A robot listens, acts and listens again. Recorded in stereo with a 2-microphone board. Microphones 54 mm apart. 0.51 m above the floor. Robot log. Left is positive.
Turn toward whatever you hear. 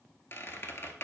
note: The squeak: about 50° left or 130° left.
cmd yaw +50
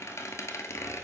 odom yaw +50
note: So it is at 70° left.
cmd yaw +70
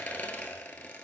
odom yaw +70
note: The squeak is now 30° left.
cmd yaw +30
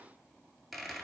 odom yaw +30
end: Facing the squeak.